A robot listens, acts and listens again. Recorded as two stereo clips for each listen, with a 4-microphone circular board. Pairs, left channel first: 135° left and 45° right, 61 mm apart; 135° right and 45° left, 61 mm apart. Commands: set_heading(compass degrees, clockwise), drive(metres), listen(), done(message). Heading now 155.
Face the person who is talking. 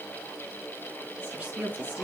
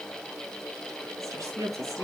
set_heading(135)
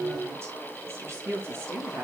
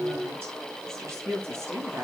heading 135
done("Found it: a woman speaking, straight ahead, over 4 m away.")